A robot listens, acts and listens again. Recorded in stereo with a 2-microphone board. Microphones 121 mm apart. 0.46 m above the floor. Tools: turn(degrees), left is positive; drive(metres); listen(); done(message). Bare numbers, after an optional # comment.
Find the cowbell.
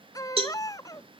# The cowbell: about 50° right or 130° right.
turn(-50)
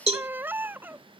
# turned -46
# So it is at 70° right.
turn(-70)
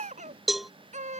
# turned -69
done("Facing the cowbell.")